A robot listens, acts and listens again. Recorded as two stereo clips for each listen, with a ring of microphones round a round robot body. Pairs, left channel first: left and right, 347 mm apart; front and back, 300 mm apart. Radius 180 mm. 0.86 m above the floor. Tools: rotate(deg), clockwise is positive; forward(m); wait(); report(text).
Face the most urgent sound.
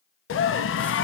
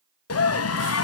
rotate(-35)
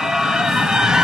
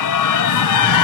report("Facing the scream, 1 to 2 m away.")